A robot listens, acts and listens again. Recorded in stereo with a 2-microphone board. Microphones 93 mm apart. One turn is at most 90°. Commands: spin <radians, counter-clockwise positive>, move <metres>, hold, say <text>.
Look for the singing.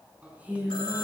spin -0.26
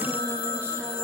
hold
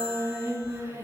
spin -1.57
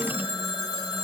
spin -1.05
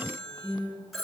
spin -0.87
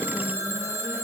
hold
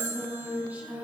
spin -0.26
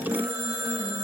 hold
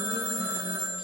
hold
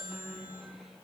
say Facing the singing.